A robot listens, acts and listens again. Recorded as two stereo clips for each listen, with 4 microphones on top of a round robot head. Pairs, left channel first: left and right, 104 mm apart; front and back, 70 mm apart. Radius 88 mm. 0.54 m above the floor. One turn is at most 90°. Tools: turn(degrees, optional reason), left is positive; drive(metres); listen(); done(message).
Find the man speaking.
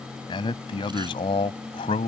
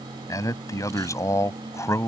turn(degrees=50, reason="The man speaking: 50° left.")
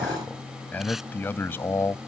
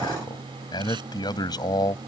turn(degrees=20, reason="The man speaking is now 20° left.")
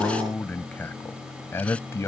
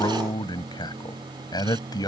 turn(degrees=20, reason="The man speaking is now 20° left.")
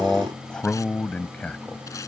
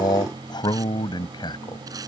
turn(degrees=10, reason="The man speaking is now 10° left.")
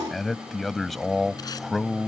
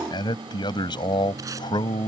done("Facing the man speaking.")